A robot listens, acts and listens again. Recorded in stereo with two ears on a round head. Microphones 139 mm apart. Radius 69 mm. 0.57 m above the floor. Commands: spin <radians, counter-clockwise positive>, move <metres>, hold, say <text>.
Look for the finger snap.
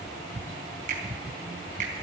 spin -0.96
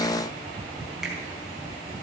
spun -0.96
say Facing the finger snap, over 4 m away.